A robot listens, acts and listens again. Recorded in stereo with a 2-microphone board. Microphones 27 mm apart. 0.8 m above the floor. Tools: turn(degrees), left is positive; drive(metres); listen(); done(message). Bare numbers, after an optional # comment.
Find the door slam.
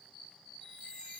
listen()
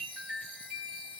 listen()
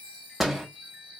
turn(-30)
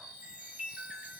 listen()
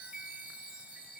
done("I heard a door slam, but can't make it out now. It was about 20° left or 140° right.")